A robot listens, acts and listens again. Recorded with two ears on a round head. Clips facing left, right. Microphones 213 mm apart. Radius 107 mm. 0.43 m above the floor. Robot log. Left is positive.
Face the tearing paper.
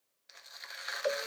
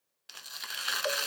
note: The tearing paper: about 70° right or 110° right.
cmd yaw -70
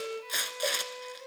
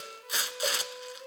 note: So it is at 15° right.
cmd yaw -15
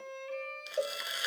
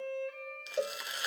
end: Facing the tearing paper, under 1 m away.